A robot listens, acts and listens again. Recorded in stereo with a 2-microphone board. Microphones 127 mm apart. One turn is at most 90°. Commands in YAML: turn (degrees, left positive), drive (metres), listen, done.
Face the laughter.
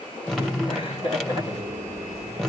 turn: 45
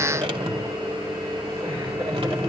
listen: true
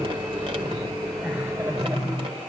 listen: true
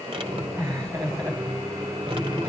turn: -20
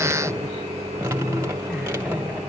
listen: true
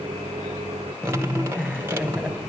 done: "Found it: laughter, straight ahead, over 4 m away."